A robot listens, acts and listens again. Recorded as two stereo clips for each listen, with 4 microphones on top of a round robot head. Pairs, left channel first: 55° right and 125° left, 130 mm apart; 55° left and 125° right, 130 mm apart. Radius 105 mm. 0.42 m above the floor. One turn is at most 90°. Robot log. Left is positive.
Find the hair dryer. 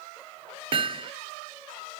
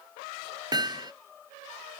cmd idle
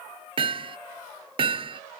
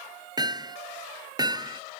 cmd idle
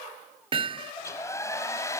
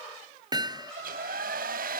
note: The hair dryer: 125° right.
cmd yaw -90
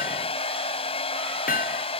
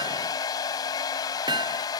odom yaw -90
end: Found it: a hair dryer, straight ahead.